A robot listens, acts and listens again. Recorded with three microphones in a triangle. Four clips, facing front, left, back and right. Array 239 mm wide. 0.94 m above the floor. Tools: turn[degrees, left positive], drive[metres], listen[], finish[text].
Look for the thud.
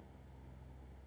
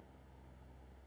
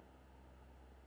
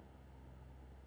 Action: listen[]
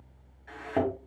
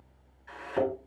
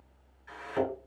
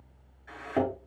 Thought: The thud: 15° right.
Action: turn[-15]
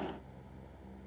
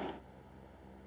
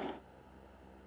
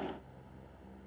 Action: finish[Facing where the thud came from. I can't hear it now.]